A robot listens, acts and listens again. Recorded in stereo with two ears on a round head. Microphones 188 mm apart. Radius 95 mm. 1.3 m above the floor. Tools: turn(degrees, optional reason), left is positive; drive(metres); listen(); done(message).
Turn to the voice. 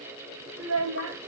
turn(degrees=-70, reason="The child speaking: about 70° right or 110° right.")
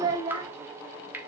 turn(degrees=-20, reason="So it is at 20° right.")
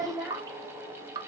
turn(degrees=-10, reason="The child speaking is now 10° right.")
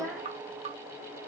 done("Found it: a child speaking, straight ahead, 1 to 2 m away.")